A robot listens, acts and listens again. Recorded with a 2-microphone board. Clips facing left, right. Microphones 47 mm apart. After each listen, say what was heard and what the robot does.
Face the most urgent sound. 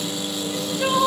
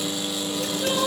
Turn 90° left.
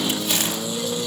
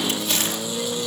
Keep listening.
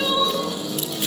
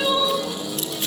Found it: crying, straight ahead.